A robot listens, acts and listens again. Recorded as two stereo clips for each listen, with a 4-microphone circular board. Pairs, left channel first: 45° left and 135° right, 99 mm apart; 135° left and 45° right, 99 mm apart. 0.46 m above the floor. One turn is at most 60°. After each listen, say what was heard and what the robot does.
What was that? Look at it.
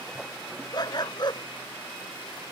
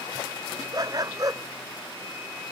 Found it: a dog barking, straight ahead.